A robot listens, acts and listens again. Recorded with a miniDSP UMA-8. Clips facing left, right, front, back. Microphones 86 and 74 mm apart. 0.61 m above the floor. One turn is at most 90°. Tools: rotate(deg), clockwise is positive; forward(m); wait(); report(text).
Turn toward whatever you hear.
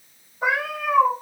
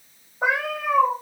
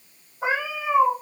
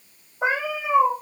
rotate(90)
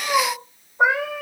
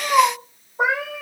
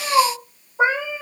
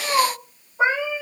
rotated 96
rotate(70)
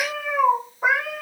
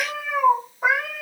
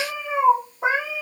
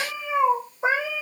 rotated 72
report("Found it: a cat meowing, straight ahead.")